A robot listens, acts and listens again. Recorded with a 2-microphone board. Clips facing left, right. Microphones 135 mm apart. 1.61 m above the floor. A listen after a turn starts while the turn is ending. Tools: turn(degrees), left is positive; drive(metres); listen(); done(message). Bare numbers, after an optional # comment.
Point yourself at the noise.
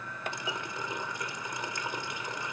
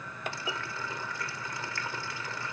# The running tap: about 20° left or 160° left.
turn(20)
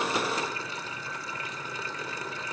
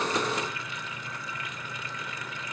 listen()
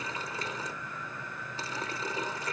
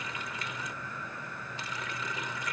# So it is at 145° left.
turn(145)
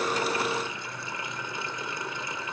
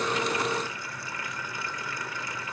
# The running tap is now 25° left.
turn(25)
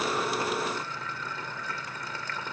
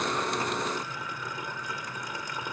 # The running tap is now 15° right.
turn(-15)
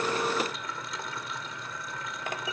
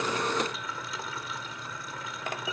done("Found it: a running tap, straight ahead.")